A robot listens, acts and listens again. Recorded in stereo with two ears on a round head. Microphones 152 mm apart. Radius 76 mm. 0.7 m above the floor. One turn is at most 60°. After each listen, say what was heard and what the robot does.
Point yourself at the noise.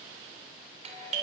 The doorbell: about 45° right or 135° right. Turn 45° right.
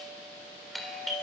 Found it: a doorbell, straight ahead.